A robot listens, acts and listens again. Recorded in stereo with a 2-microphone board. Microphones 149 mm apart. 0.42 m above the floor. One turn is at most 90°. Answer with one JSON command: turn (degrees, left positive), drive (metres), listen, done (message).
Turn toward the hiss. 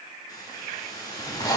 {"turn": 25}
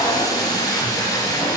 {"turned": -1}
{"listen": true}
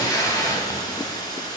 {"turn": 25}
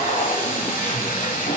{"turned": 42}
{"listen": true}
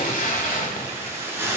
{"turn": -15}
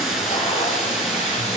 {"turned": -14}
{"done": "Found it: a hiss, straight ahead, 2 to 4 m away."}